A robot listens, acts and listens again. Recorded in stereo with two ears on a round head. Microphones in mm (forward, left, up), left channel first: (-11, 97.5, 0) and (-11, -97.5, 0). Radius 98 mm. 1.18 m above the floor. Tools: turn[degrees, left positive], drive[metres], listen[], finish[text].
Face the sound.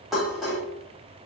Action: turn[30]
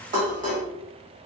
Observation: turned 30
Thought: So it is at 35° right.
Action: turn[-35]
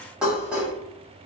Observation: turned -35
Action: finish[Found it: dishes clattering, straight ahead, 1 to 2 m away.]